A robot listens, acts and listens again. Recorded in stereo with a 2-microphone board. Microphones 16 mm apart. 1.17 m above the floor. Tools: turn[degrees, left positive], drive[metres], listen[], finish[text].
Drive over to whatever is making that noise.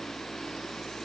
Action: listen[]
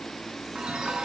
Thought: The chime: about 75° right or 105° right.
Action: turn[-75]
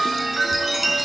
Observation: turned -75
Thought: So it is at 15° right.
Action: turn[-15]
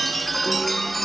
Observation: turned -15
Action: drive[1.0]
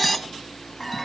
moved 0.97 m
Action: drive[1.0]
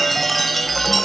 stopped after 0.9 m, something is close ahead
Action: finish[Arrived at the chime, straight ahead.]